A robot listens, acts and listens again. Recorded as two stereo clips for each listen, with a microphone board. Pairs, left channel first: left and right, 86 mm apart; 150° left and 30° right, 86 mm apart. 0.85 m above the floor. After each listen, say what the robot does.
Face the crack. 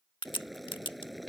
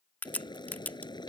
Turn 80° left.
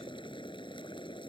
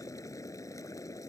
Facing where the crack came from. I can't hear it now.